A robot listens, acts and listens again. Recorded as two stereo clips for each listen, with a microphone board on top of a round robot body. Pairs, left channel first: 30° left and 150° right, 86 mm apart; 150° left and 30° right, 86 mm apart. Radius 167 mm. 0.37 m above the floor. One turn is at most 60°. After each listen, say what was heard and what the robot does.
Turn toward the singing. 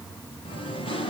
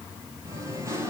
The singing: 25° left. Turn 25° left.
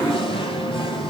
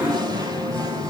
The singing is now 15° left. Turn 15° left.
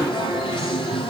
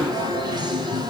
The singing is now 10° left. Turn 10° left.
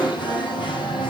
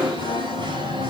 Facing the singing, over 4 m away.